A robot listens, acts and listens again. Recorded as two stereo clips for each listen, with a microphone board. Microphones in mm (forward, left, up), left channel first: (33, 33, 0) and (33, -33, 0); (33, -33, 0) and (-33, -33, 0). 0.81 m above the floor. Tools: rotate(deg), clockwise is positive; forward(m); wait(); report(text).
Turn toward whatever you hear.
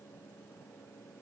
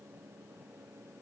wait()
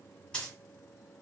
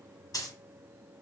rotate(-15)
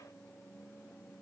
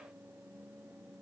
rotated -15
report("Facing where the dropped coin came from. I can't hear it now.")